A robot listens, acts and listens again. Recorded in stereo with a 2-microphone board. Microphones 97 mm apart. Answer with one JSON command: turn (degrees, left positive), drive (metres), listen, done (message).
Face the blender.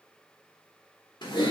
{"listen": true}
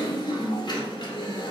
{"listen": true}
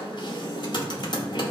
{"done": "I can't make out a blender, only typing on a keyboard."}